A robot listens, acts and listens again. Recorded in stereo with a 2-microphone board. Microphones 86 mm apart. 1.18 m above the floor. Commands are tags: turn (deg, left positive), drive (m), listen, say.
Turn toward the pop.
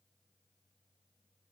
<listen/>
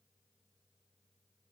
<listen/>
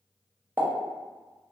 <turn deg="-25"/>
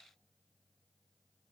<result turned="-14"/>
<listen/>
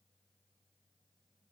<say>I heard a pop, but can't make it out now. It was about 10° right or 145° right.</say>